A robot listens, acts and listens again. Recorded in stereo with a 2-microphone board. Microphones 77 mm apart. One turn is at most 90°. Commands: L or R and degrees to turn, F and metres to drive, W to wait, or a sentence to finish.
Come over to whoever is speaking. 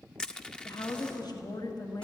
L65
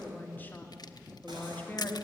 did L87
L25
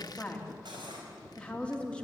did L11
L15
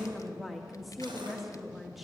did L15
F1.0
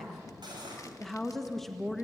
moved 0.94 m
F1.0
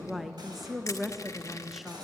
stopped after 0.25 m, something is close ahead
I am next to the woman speaking.